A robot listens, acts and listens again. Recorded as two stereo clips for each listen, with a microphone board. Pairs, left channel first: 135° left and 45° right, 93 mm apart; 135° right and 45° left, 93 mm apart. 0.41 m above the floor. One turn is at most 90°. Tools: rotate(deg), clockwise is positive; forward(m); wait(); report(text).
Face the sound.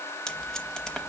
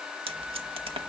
rotate(-50)
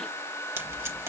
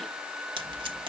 rotate(-15)
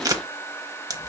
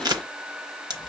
report("Facing the tape being pulled.")